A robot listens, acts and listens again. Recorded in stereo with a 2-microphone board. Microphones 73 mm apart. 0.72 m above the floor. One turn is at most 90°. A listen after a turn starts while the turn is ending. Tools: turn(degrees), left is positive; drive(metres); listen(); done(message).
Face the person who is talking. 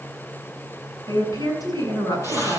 turn(degrees=65)
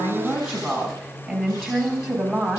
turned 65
done("Facing the woman speaking, over 4 m away.")